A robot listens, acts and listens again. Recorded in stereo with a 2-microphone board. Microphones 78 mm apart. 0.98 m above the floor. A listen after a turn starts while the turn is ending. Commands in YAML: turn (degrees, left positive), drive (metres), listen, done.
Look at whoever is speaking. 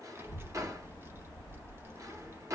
turn: -30
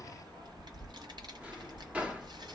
turn: -115
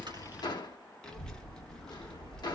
turn: 10
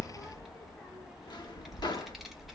done: "Found it: a child speaking, straight ahead."